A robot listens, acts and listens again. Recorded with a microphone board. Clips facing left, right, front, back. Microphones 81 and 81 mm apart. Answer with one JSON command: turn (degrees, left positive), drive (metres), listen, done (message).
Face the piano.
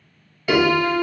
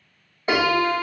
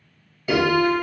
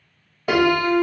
{"turn": -145}
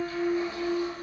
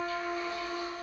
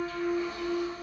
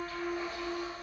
{"turn": -40}
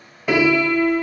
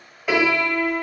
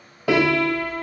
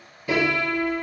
{"done": "Facing the piano, under 1 m away."}